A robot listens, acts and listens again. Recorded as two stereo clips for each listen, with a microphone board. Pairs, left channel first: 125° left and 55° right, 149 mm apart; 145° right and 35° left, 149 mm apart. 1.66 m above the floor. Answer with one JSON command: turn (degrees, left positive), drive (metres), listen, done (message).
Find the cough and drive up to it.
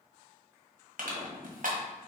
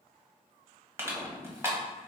{"listen": true}
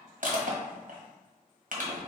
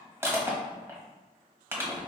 {"listen": true}
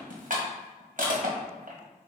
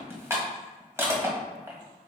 {"done": "I can't make out a cough, only crushing."}